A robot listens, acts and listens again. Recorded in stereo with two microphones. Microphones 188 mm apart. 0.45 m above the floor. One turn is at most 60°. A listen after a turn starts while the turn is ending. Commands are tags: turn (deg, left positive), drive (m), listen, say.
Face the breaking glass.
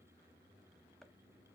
<listen/>
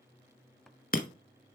<turn deg="50"/>
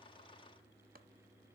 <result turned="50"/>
<listen/>
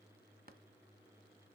<say>I heard breaking glass, but can't make it out now. It was about straight ahead or 80° left.</say>